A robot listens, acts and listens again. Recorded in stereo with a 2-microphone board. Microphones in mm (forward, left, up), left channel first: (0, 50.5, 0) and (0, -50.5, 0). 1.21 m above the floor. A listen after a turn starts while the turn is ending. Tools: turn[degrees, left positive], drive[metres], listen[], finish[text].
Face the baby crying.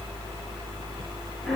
Action: listen[]
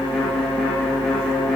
Action: listen[]
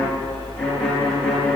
Action: finish[I can't make out a baby crying, only a violin.]